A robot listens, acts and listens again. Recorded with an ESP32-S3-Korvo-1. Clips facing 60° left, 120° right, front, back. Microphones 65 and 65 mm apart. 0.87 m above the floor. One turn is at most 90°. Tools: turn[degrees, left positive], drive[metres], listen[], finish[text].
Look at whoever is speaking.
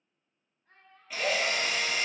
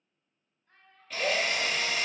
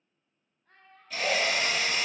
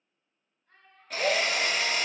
Thought: The child speaking: 20° left.
Action: turn[20]
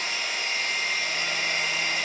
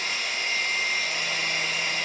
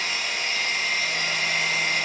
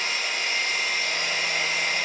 Action: listen[]
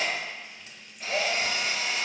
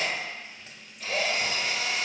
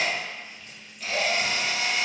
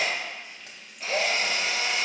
Action: listen[]
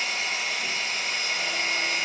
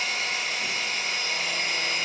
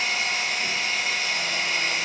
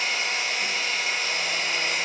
Action: finish[I heard a child speaking from this way, but can't make it out now.]